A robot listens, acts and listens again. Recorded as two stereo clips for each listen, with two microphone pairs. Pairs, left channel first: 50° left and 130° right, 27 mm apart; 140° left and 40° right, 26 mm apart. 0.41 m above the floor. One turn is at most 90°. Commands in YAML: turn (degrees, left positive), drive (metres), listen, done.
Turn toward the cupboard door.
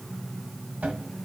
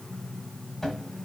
turn: -90
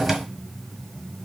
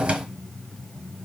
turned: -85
turn: -55
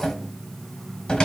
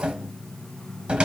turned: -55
done: "Facing the cupboard door, 1 to 2 m away."